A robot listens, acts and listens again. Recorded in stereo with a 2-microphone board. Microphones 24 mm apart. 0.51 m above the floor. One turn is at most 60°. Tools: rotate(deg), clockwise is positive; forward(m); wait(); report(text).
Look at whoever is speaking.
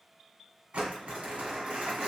wait()
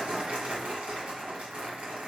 wait()
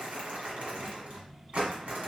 rotate(-30)
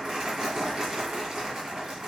wait()
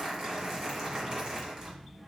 rotate(-60)
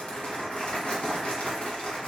rotate(-60)
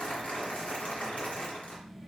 rotate(-30)
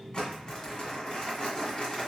report("Found it: a child speaking, straight ahead.")